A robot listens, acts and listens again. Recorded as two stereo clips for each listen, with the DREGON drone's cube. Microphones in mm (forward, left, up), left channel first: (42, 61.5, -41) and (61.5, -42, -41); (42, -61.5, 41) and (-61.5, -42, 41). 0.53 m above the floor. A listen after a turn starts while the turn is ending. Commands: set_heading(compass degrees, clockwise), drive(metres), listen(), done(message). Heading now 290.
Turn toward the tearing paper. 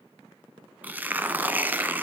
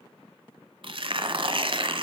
set_heading(85)
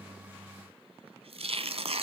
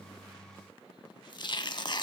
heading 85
set_heading(140)
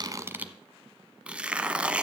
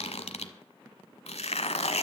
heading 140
done("Facing the tearing paper.")